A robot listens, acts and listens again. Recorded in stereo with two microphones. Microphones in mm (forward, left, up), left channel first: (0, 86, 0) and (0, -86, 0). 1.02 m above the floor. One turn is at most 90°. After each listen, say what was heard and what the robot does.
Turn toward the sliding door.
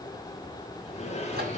The sliding door: about 40° left or 140° left. Turn 40° left.
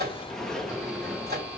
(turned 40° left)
Found it: a sliding door, straight ahead, 1 to 2 m away.